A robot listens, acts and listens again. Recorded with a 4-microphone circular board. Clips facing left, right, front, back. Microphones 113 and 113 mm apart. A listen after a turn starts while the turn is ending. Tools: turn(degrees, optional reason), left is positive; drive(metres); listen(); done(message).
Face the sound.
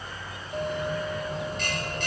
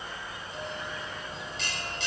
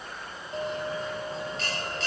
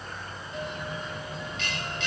turn(degrees=50, reason="The bell: 50° left.")
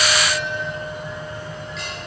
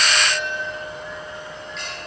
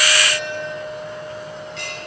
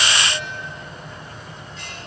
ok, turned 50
done("Found it: a bell, straight ahead.")